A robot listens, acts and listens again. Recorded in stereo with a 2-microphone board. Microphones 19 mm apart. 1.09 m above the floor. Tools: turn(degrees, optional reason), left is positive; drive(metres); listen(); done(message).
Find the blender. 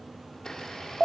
turn(degrees=35, reason="The blender: about 35° left or 145° left.")
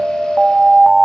listen()
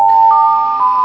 listen()
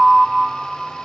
done("I heard a blender, but can't make it out now. It was about straight ahead or 110° left.")